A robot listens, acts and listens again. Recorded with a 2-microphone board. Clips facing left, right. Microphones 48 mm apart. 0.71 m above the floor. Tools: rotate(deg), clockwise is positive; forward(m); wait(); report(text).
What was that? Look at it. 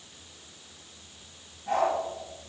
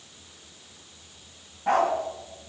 rotate(90)
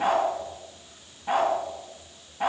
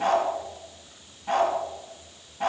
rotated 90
rotate(-10)
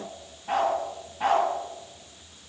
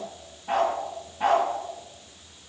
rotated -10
report("Facing the dog barking.")